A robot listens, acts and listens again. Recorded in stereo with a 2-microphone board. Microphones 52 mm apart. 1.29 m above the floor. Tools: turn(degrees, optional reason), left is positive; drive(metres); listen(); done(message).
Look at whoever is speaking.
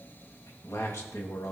turn(degrees=65, reason="The man speaking: about 65° left or 115° left.")
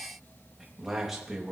done("Facing the man speaking, 2 to 4 m away.")